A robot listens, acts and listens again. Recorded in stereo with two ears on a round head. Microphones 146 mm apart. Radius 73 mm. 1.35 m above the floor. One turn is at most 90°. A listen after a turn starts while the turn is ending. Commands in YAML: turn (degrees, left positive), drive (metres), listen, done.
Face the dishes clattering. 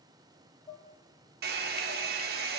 turn: 25
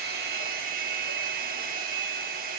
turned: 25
listen: true
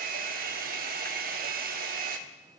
listen: true
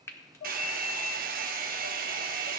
turn: 90
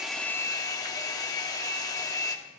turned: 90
turn: 35
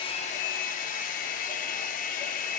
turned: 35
listen: true
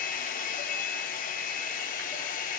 done: "Facing where the dishes clattering came from. I can't hear it now."